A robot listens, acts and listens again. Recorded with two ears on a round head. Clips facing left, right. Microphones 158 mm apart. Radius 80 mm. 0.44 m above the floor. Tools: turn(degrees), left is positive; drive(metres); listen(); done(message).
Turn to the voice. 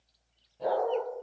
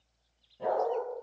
listen()
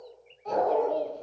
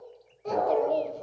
turn(degrees=-60)
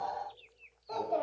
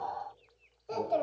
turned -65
turn(degrees=-45)
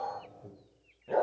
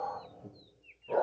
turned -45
done("Found it: a child speaking, straight ahead, 1 to 2 m away.")